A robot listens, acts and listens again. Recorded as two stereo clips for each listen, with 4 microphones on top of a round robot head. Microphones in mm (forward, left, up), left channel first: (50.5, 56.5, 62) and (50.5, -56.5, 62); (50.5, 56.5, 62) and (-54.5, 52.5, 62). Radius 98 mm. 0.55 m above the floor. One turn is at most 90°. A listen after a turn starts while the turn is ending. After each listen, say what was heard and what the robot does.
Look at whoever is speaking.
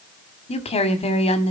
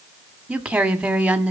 The woman speaking: 105° left. Turn 90° left.
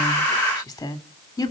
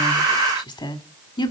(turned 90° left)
The woman speaking is now 35° left. Turn 35° left.
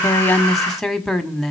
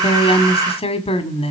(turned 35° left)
Found it: a woman speaking, straight ahead, 1 to 2 m away.